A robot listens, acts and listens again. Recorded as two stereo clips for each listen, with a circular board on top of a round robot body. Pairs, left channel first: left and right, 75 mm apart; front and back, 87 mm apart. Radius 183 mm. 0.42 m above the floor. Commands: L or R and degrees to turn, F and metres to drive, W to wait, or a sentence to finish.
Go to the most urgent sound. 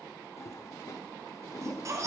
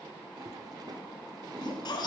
R40
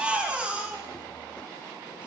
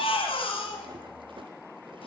R15
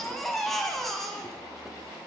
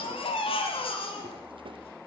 F1.0
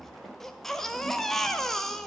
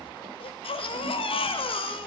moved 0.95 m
F1.0
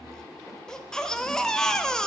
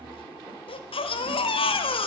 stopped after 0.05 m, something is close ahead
L10
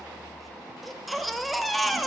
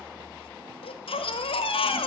Arrived at the baby crying, straight ahead.